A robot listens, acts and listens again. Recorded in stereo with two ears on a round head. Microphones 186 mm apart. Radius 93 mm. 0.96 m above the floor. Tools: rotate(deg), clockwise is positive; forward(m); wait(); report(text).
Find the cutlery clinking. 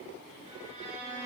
wait()
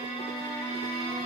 wait()
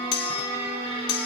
rotate(-45)
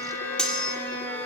report("Facing the cutlery clinking.")